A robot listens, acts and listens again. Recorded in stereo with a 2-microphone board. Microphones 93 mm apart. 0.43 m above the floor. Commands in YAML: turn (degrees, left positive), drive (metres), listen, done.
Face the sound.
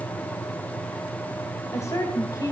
turn: 40
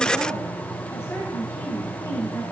turn: 35
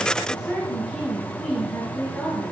turn: 10
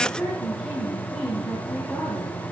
done: "Facing the woman speaking."